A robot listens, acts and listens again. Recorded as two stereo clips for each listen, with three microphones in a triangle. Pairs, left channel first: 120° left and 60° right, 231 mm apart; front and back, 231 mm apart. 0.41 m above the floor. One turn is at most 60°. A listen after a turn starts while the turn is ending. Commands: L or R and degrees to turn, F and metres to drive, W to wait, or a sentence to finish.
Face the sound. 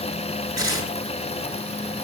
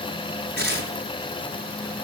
R60
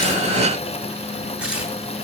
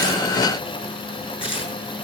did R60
R60
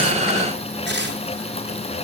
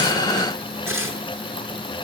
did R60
R20
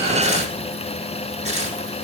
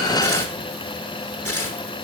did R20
Found it: tearing paper, straight ahead.